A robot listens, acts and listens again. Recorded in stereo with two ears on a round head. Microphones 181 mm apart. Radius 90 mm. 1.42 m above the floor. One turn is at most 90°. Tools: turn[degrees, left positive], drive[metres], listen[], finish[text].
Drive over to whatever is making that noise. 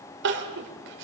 Thought: The crying: about 65° right or 115° right.
Action: turn[-65]
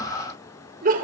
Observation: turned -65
Thought: So it is at 45° right.
Action: turn[-45]
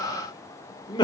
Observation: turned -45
Thought: The crying is now 25° left.
Action: turn[25]
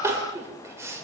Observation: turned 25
Thought: The crying is now 15° right.
Action: turn[-15]
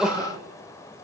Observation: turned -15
Action: drive[1.0]
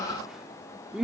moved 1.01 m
Action: drive[1.0]
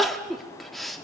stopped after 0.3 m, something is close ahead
Action: finish[I am next to the crying.]